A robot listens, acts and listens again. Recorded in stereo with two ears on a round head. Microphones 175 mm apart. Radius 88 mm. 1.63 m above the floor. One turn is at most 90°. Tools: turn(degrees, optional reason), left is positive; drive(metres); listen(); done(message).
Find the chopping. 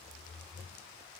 listen()
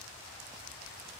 listen()
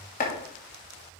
turn(degrees=45, reason="The chopping: about 45° left or 135° left.")
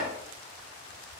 listen()
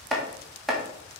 done("Found it: chopping, straight ahead, 1 to 2 m away.")